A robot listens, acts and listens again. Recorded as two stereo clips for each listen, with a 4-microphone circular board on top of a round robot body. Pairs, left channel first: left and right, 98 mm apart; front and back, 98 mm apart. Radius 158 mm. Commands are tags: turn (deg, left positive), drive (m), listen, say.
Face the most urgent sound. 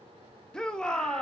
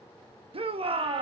<turn deg="170"/>
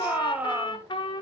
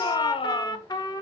<turn deg="-15"/>
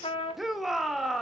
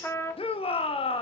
<say>Facing the shout.</say>